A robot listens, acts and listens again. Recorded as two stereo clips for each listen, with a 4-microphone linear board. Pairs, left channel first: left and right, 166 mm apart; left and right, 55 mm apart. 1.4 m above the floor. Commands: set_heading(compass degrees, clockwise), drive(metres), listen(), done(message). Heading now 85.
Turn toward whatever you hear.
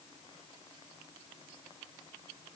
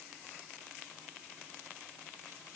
listen()
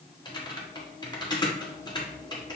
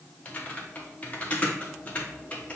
set_heading(60)
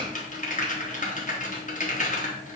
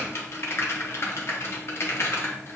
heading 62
set_heading(292)
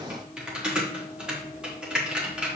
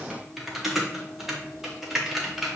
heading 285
done("Found it: typing on a keyboard, straight ahead.")